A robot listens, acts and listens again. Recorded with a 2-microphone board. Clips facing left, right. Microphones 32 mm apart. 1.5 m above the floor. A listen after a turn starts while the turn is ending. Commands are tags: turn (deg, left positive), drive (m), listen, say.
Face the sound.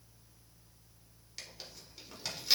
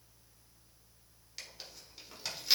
<turn deg="-30"/>
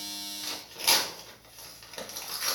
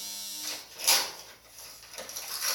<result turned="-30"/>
<turn deg="25"/>
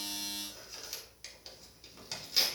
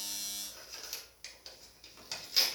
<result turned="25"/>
<say>Found it: tearing paper, straight ahead, 1 to 2 m away.</say>